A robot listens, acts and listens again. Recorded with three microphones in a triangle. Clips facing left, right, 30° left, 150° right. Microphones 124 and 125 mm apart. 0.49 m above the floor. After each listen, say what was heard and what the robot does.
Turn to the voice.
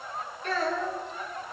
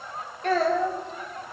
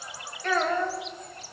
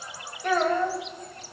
The child speaking: 75° right. Turn 75° right.
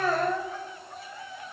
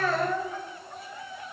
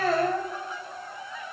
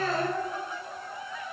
The child speaking is now 15° left. Turn 15° left.
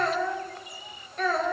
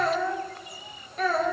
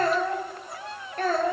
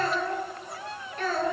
Facing the child speaking, 1 to 2 m away.